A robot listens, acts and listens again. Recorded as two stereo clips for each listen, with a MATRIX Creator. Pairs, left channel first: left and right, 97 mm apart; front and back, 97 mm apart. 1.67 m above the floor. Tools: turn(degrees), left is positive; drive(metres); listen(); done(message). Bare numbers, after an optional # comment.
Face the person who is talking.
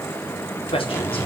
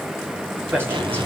# The man speaking: 110° left.
turn(110)
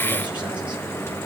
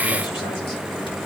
listen()
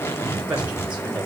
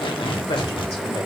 # The man speaking is now 15° right.
turn(-15)
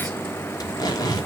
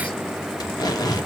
listen()
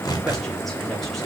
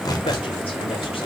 listen()
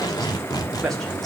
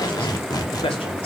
done("Found it: a man speaking, straight ahead, over 4 m away.")